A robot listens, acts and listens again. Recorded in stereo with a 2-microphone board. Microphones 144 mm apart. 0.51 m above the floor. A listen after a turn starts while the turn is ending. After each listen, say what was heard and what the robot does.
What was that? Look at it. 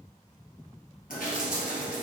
Turn 90° left.
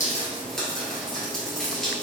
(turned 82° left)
Found it: dripping, straight ahead.